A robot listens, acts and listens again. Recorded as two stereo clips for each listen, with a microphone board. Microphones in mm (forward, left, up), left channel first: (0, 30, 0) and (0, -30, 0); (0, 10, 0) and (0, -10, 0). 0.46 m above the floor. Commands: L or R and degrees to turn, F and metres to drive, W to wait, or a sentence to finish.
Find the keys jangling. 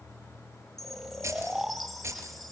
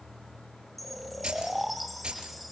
R50
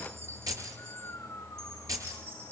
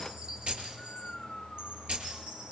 R80
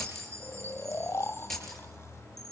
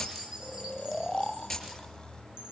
Facing the keys jangling, over 4 m away.